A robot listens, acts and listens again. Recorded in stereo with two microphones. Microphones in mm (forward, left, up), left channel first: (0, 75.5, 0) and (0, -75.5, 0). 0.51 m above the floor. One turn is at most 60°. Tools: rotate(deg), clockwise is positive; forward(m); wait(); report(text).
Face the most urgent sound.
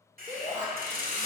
rotate(55)
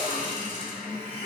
wait()
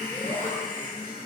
wait()
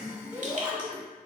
rotate(20)
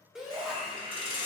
report("Facing the shout.")